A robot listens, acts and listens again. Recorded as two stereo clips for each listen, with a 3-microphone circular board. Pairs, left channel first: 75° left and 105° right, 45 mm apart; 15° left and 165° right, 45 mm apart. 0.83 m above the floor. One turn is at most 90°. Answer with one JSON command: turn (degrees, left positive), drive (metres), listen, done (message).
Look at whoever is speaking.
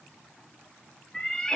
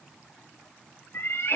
{"listen": true}
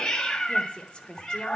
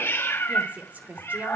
{"turn": 90}
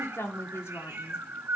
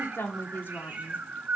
{"turn": 60}
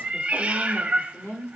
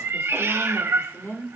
{"turn": 35}
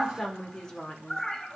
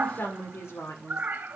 {"done": "Found it: a woman speaking, straight ahead, 1 to 2 m away."}